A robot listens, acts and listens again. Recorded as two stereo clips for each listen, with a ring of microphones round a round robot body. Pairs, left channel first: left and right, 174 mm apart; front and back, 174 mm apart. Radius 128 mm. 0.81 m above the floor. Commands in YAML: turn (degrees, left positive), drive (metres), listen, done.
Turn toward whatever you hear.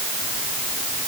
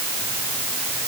listen: true
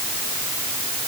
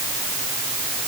listen: true
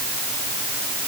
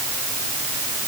done: "I can't make out anything."